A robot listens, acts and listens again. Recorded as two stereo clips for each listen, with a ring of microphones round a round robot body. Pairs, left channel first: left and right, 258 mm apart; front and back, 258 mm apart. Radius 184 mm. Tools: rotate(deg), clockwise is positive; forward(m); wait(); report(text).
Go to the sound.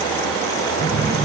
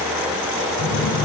forward(1.0)
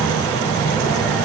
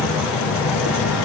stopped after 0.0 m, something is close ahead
report("Blocked. The phone buzzing is further on, straight ahead.")